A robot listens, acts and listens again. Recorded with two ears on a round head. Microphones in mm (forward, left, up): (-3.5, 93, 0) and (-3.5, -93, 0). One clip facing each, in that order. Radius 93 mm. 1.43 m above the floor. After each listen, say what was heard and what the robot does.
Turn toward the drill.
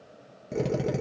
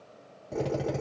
The drill: about 30° left or 150° left. Turn 30° left.
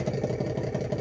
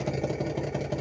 Facing the drill, 1 to 2 m away.